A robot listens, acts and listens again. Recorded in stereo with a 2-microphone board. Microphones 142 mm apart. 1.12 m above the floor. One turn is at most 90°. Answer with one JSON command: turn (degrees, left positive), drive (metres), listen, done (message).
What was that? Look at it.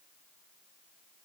{"listen": true}
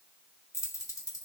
{"turn": 25}
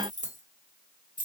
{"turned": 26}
{"turn": 90}
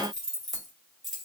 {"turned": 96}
{"done": "Found it: keys jangling, straight ahead, 1 to 2 m away."}